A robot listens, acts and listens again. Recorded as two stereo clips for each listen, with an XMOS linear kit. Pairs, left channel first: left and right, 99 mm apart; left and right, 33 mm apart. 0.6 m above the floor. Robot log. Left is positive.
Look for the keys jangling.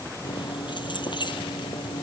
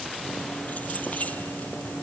note: The keys jangling: about 50° left or 130° left.
cmd yaw +50
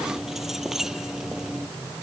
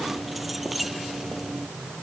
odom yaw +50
end: Facing the keys jangling.